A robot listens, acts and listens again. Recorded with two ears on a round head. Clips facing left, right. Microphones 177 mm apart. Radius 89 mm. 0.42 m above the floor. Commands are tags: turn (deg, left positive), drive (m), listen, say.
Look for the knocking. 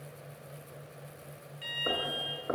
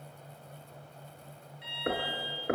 <turn deg="-25"/>
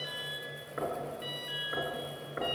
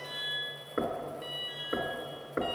<turn deg="-130"/>
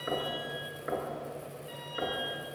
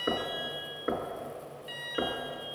<turn deg="-45"/>
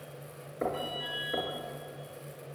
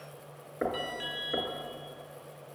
<turn deg="-10"/>
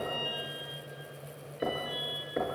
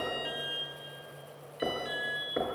<say>Facing the knocking, 2 to 4 m away.</say>